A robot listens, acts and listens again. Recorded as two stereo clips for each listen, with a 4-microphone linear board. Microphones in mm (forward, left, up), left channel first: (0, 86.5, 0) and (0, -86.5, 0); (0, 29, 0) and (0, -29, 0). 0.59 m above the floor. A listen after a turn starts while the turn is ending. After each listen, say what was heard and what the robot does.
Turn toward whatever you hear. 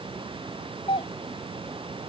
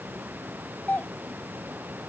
The doorbell: about 30° left or 150° left. Turn 30° left.
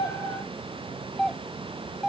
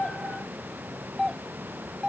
Found it: a doorbell, straight ahead.